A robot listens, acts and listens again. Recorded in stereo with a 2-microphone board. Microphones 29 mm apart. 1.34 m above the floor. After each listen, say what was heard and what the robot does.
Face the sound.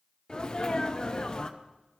The sneeze: about 30° left or 150° left. Turn 30° left.
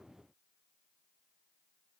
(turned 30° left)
Keep listening.
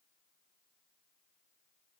I heard a sneeze, but can't make it out now. It was about straight ahead or 120° left.